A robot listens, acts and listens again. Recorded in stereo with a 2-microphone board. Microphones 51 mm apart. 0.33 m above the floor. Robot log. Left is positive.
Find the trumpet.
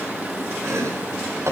cmd idle
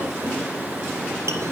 cmd idle
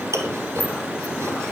end: I can't make out a trumpet to turn to.